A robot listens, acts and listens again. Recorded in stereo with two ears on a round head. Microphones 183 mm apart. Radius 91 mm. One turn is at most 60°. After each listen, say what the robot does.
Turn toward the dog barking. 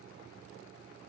Keep listening.
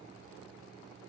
Keep listening.
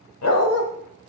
Turn 60° left.
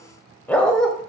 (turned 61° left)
Facing the dog barking, 1 to 2 m away.